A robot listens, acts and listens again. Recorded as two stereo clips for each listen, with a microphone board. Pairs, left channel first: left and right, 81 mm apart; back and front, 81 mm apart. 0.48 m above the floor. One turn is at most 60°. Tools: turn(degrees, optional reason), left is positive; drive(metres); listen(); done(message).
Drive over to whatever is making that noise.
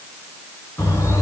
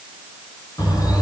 turn(degrees=60, reason="The bird: 140° left.")
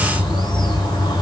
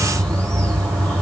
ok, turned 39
turn(degrees=60, reason="The bird is now 100° left.")
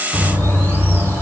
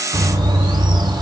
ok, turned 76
turn(degrees=25, reason="The bird is now 25° left.")
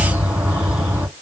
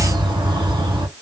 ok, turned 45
turn(degrees=-20, reason="The bird is now 20° right.")
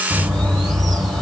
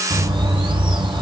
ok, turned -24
drive(metres=1.0)
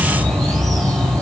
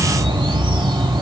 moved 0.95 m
drive(metres=1.0)
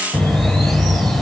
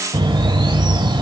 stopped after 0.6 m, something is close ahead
done("Arrived at the bird, straight ahead.")